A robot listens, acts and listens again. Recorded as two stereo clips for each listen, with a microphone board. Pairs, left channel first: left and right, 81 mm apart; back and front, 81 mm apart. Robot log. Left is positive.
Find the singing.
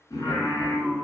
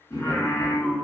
note: The singing: 130° left.
cmd yaw +130
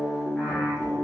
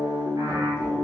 end: Facing the singing, 1 to 2 m away.